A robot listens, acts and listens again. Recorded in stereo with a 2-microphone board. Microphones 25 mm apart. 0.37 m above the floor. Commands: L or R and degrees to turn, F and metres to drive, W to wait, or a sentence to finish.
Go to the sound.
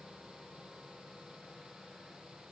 W
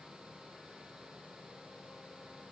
W
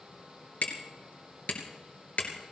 L75
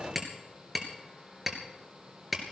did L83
R10
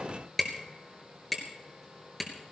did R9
F1.0
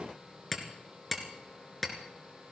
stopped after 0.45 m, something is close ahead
Something is in my way. I am facing the hammering but have not reached it.